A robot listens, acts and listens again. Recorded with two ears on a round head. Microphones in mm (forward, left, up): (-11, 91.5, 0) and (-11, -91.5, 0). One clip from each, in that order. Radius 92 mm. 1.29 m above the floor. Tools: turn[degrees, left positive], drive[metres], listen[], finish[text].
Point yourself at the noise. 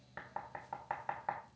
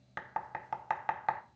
Action: turn[-90]
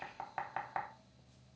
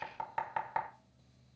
Action: finish[Facing the knocking.]